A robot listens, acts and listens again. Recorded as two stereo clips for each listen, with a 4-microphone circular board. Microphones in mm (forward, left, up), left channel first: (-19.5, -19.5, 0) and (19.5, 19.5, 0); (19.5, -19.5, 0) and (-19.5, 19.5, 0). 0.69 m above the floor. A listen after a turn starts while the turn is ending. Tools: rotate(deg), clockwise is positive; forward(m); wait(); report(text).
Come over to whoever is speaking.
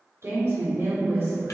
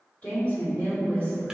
rotate(-15)
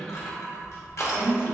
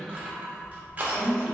forward(1.0)
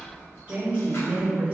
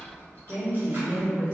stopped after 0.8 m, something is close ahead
rotate(10)
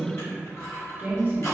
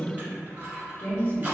report("I am next to the woman speaking.")